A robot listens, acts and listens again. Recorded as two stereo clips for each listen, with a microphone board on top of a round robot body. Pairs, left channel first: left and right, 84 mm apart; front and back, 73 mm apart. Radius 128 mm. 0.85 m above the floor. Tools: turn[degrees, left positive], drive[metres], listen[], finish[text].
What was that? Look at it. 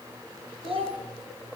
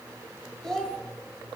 Thought: The child speaking: 85° right.
Action: turn[-85]
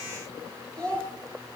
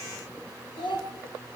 Thought: The child speaking is now 10° left.
Action: turn[10]
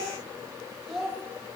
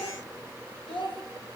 Action: finish[Facing the child speaking, 2 to 4 m away.]